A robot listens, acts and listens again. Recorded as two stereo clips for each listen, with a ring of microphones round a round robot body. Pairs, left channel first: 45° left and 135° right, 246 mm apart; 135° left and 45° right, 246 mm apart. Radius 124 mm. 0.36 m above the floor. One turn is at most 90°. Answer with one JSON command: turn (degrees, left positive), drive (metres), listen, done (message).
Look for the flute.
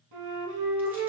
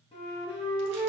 {"turn": -90}
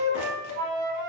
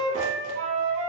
{"turn": -90}
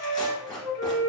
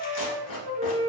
{"turn": 15}
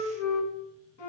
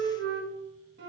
{"done": "Facing the flute."}